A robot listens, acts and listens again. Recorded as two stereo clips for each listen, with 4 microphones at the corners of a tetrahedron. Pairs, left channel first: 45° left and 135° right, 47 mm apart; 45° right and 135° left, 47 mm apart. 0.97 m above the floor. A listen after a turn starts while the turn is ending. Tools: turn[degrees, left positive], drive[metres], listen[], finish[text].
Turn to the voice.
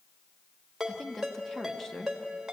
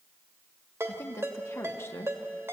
Thought: The woman speaking: 35° right.
Action: turn[-35]
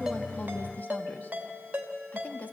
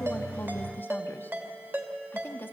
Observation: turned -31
Action: finish[Facing the woman speaking, 1 to 2 m away.]